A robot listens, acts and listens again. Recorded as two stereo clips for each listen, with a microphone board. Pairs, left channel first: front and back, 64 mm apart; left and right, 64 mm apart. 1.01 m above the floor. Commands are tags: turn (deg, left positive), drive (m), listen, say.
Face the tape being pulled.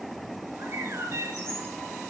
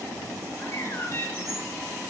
<listen/>
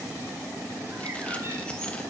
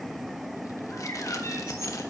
<listen/>
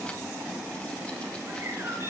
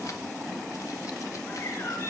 <say>I can't make out tape being pulled, only a bird.</say>